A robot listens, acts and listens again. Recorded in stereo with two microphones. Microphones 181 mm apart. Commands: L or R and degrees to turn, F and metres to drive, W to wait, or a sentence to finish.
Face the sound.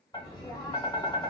L20
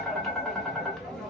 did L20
Facing the tapping.